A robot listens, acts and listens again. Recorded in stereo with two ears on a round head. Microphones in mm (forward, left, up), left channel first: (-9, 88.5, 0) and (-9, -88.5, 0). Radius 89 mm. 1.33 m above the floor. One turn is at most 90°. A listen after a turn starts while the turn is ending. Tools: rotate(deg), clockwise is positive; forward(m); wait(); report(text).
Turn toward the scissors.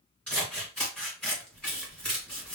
rotate(-30)
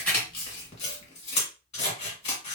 rotate(-90)
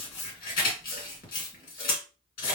rotate(-45)
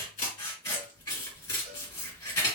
rotate(-20)
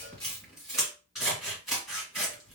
report("Found it: scissors, straight ahead.")